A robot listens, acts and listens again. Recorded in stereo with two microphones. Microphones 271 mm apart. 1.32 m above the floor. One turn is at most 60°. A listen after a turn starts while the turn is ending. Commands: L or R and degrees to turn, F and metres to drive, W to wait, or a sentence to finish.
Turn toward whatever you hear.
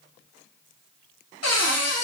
L60
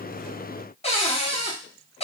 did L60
L25
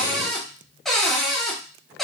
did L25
Found it: a cupboard door, straight ahead.